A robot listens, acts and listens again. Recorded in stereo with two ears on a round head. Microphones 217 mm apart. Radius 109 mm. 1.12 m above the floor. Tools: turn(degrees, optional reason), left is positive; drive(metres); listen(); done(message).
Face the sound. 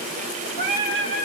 turn(degrees=-55, reason="The singing: about 55° right or 125° right.")
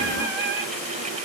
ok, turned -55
turn(degrees=-40, reason="So it is at 40° right.")
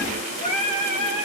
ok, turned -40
turn(degrees=35, reason="The singing is now 35° left.")
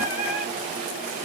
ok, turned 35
listen()
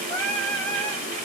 done("Facing the singing.")